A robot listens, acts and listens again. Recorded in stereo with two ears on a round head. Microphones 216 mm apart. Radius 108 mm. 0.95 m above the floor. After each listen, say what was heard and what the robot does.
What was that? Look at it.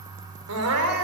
The crying: about 75° right or 105° right. Turn 75° right.
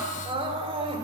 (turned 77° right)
So it is at 25° right. Turn 25° right.
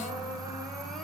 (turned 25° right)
Keep listening.
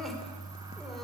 Keep listening.
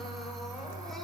I heard crying from this way, but can't make it out now.